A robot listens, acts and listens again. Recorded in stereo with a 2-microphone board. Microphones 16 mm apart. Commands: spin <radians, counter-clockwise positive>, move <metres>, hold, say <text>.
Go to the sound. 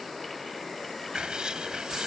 spin -1.05
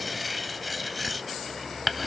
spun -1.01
move 1.0
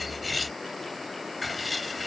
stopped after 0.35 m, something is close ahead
say Blocked. The writing is further on, straight ahead.